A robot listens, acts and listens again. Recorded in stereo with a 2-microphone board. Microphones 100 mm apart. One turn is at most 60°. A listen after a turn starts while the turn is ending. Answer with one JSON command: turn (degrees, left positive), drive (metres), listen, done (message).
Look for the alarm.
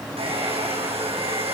{"listen": true}
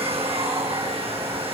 {"listen": true}
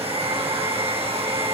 {"done": "I can't make out an alarm, only a hair dryer."}